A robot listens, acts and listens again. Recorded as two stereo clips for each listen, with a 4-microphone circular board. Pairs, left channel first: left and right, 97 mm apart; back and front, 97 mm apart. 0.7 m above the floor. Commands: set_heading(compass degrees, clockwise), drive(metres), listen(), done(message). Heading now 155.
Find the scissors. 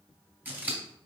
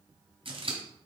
set_heading(175)
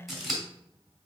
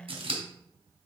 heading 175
done("Facing the scissors.")